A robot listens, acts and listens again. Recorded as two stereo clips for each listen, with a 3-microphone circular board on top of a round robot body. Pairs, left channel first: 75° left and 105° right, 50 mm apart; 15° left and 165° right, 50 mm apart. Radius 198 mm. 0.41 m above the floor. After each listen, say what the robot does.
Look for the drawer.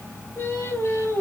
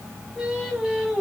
Keep listening.
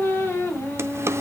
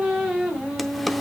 Turn 75° right.
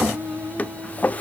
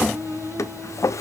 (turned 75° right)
Turn 15° left.
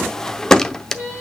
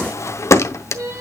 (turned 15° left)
Facing the drawer.